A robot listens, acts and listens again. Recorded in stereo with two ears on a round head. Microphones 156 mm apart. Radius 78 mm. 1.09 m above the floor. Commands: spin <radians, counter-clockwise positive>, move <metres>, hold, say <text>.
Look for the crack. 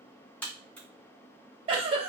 spin 0.52
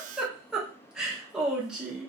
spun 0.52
hold
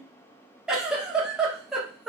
say I heard a crack, but can't make it out now. It was about 20° right or 140° left.